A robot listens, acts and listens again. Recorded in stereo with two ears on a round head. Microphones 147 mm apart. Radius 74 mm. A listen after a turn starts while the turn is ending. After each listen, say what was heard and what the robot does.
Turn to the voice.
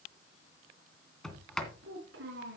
Turn 90° right.
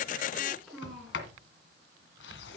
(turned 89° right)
Facing the child speaking.